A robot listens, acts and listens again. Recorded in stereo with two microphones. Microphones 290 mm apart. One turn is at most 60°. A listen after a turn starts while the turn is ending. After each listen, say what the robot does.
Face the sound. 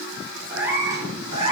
Turn 20° right.
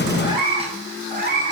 Turn 40° right.
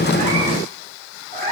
Turn 30° right.
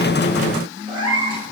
Turn 15° right.
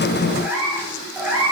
Found it: a cat meowing, straight ahead.